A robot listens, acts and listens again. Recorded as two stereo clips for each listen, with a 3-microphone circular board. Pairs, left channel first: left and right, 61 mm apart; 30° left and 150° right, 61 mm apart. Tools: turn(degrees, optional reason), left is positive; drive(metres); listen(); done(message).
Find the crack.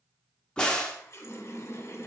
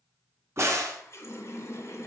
turn(degrees=170, reason="The crack: 170° left.")
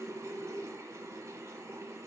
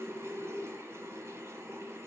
done("Facing where the crack came from. I can't hear it now.")